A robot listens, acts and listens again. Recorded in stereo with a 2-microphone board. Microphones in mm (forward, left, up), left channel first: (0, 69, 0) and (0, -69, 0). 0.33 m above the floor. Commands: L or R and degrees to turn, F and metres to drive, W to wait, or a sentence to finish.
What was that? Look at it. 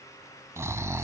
R20
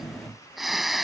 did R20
Found it: snoring, straight ahead.